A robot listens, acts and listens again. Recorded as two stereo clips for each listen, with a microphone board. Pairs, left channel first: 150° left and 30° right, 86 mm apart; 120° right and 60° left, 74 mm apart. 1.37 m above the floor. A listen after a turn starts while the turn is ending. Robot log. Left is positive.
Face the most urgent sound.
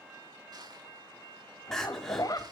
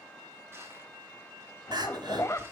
note: The crying: 65° left.
cmd yaw +65
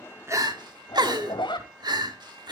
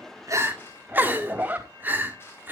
end: Found it: crying, straight ahead.